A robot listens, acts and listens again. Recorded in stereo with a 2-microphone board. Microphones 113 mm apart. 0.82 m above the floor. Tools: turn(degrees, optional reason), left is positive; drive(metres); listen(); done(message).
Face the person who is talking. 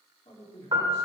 turn(degrees=70, reason="The man speaking: about 70° left or 110° left.")
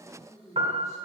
turn(degrees=30, reason="So it is at 30° left.")
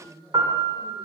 turn(degrees=10, reason="The man speaking is now 10° left.")
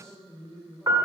turn(degrees=10, reason="The man speaking is now 10° left.")
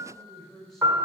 done("Facing the man speaking, 2 to 4 m away.")